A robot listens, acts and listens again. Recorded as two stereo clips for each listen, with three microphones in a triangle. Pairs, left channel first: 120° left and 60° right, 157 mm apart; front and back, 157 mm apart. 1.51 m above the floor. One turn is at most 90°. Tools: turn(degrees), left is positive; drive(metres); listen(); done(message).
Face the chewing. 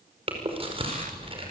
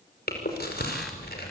done("Facing the chewing, over 4 m away.")